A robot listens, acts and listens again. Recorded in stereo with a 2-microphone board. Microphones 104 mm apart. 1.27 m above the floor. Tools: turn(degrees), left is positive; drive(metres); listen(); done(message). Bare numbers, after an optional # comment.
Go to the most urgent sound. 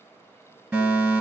turn(-30)
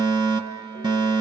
# So it is at 135° right.
turn(-135)
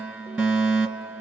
# The fire alarm is now 15° right.
turn(-15)
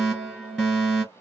drive(1.0)
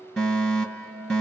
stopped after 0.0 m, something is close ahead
done("Blocked. The fire alarm is further on, straight ahead.")